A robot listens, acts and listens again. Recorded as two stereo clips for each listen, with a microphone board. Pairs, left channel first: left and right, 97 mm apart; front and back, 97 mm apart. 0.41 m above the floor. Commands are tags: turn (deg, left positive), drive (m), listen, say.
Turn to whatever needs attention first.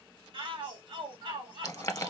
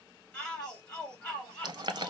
<turn deg="-80"/>
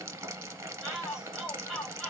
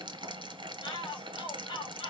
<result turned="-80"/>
<turn deg="-10"/>
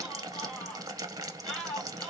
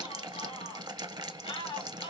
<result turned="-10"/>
<say>Found it: a shout, straight ahead.</say>